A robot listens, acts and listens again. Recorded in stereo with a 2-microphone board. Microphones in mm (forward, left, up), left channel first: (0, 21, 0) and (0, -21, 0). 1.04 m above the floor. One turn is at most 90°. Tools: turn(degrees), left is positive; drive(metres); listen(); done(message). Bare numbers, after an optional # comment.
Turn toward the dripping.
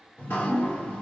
turn(90)
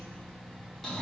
# So it is at 10° left.
turn(10)
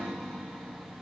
done("Facing the dripping.")